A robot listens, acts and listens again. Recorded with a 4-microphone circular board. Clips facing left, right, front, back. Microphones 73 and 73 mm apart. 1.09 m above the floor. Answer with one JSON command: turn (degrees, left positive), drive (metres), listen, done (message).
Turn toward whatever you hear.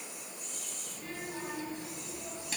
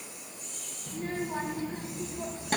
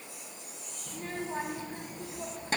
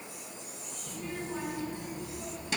{"turn": -50}
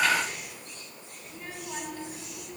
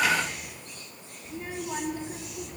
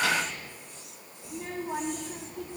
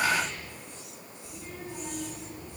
{"turn": -15}
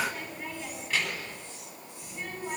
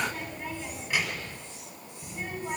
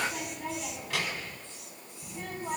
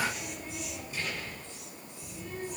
{"turn": -10}
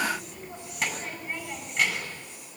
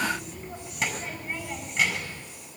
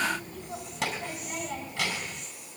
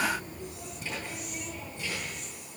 {"done": "Facing the child speaking, over 4 m away."}